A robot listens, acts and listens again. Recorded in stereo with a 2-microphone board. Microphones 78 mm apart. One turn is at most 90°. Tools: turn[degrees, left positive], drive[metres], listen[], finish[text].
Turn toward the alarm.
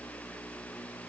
Action: listen[]
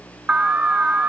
Thought: The alarm: about 20° right or 160° right.
Action: turn[-20]
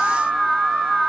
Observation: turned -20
Action: finish[Facing the alarm, 1 to 2 m away.]